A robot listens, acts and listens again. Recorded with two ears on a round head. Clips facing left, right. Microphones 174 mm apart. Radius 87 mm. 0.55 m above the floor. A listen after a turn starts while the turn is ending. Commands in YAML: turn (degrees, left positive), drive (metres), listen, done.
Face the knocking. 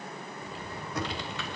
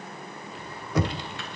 turn: -60
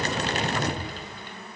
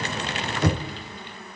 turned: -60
turn: -55
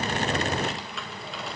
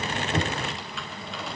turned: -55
listen: true
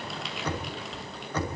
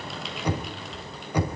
turn: -10
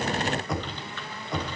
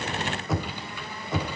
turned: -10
done: "Found it: knocking, straight ahead."